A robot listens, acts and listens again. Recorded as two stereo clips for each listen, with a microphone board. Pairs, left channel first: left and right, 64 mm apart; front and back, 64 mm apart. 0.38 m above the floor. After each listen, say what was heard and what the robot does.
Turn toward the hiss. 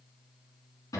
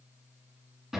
Keep listening.
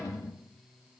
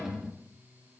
Keep listening.
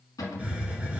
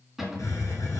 The hiss: 20° right. Turn 20° right.
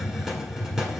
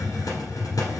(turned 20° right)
Found it: a hiss, straight ahead, 1 to 2 m away.